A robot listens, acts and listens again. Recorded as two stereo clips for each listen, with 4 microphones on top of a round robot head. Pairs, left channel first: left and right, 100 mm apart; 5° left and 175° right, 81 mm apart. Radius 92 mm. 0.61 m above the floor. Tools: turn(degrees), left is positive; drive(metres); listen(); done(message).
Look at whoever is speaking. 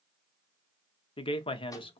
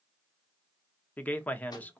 turn(degrees=75)
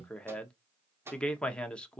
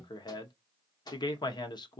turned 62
turn(degrees=10)
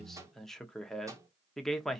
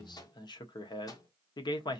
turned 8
done("Found it: a man speaking, straight ahead, 1 to 2 m away.")